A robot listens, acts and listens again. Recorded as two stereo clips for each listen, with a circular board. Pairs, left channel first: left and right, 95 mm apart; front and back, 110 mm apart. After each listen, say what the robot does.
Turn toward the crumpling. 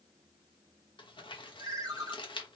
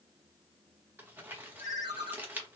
Turn 110° left.
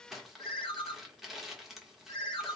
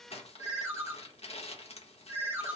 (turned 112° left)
Facing the crumpling.